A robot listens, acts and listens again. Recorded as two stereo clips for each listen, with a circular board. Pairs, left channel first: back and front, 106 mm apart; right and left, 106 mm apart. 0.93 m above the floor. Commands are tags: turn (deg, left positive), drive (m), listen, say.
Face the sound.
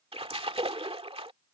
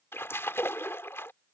<turn deg="-20"/>
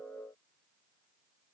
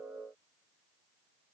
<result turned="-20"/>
<say>Facing where the splash came from. I can't hear it now.</say>